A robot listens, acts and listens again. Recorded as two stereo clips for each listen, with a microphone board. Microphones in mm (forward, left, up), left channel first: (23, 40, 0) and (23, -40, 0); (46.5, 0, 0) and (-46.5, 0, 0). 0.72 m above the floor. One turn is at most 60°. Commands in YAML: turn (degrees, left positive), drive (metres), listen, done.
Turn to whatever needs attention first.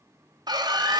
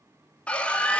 turn: -60
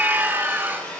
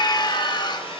turn: -25
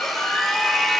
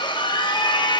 done: "Facing the scream."